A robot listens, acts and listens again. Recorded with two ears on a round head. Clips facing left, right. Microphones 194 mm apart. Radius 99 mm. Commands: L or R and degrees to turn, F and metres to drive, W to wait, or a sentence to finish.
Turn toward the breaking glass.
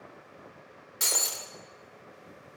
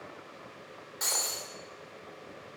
L40
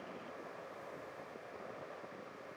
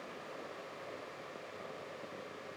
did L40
W
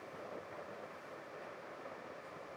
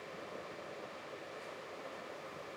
I heard breaking glass, but can't make it out now. It was about straight ahead or 100° left.